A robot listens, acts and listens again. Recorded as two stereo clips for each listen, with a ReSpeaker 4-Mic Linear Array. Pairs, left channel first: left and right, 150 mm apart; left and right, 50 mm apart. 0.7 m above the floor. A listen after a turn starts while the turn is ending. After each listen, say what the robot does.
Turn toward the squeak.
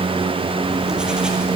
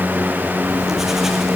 Keep listening.
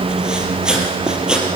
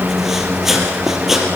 Keep listening.
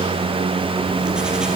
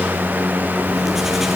I can't make out a squeak to turn to.